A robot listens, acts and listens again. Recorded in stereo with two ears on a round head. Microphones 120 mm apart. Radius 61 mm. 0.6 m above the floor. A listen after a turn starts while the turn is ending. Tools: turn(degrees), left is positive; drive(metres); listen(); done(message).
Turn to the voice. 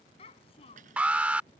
turn(degrees=40)
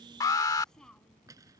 listen()
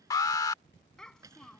done("Found it: a child speaking, straight ahead.")